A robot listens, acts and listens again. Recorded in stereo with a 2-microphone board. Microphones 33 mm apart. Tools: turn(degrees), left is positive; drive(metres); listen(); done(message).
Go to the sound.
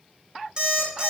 turn(degrees=-25)
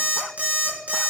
turn(degrees=-130)
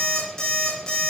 turn(degrees=20)
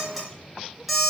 drive(metres=1.0)
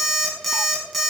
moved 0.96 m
drive(metres=1.0)
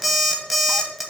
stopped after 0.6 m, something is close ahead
turn(degrees=-10)
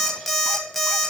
done("Arrived at the alarm clock, straight ahead.")